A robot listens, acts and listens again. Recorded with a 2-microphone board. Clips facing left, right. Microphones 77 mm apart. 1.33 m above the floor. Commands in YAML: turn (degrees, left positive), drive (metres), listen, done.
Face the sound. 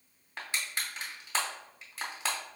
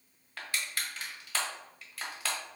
turn: 25
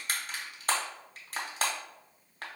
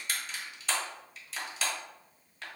turn: 130
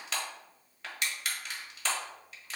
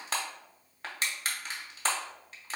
turn: -40
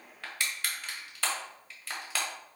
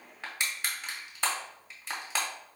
turn: -20
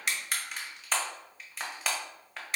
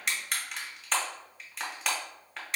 done: "Facing the crushing."